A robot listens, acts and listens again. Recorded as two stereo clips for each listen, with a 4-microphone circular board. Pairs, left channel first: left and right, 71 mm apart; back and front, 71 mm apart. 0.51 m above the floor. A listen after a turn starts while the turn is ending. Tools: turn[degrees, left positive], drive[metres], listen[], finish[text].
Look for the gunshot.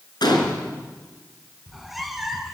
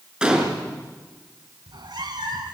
Thought: The gunshot: 80° left.
Action: turn[80]
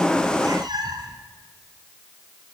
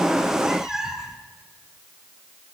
Action: finish[Facing where the gunshot came from. I can't hear it now.]